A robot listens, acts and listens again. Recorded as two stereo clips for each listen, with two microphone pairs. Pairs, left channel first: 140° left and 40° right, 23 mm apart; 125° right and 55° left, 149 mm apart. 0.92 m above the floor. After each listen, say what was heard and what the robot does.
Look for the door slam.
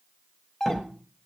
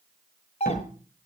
The door slam: 120° right. Turn 120° right.
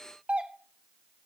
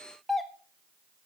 I heard a door slam from this way, but can't make it out now.